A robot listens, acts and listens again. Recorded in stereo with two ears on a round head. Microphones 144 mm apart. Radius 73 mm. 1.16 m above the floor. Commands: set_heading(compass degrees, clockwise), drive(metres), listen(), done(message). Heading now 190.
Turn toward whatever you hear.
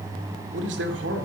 set_heading(280)
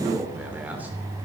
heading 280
set_heading(290)
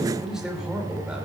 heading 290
done("Facing the man speaking, 2 to 4 m away.")